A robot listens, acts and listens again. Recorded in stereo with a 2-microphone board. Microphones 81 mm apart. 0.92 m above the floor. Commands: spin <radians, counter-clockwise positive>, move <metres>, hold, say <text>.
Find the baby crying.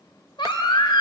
spin 1.57
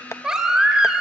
spin -0.17
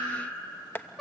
say Found it: a baby crying, straight ahead, 2 to 4 m away.